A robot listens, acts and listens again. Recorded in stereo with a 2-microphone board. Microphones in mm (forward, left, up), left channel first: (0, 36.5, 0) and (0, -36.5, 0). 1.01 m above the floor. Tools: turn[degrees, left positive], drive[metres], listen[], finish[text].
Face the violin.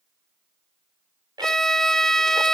Action: turn[30]
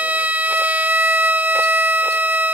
Thought: So it is at 20° right.
Action: turn[-20]
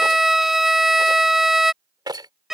Action: finish[Facing the violin.]